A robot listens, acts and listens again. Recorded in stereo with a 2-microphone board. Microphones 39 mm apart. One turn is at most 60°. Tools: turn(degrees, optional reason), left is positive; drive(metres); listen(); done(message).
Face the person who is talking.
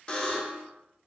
listen()
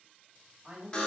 turn(degrees=-20, reason="The woman speaking: about 20° right or 160° right.")
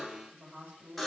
turn(degrees=-60, reason="So it is at 140° right.")
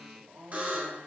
turn(degrees=-60, reason="The woman speaking is now 90° right.")
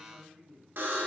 turn(degrees=-35, reason="The woman speaking is now 35° right.")
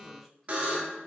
listen()
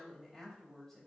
done("Facing the woman speaking.")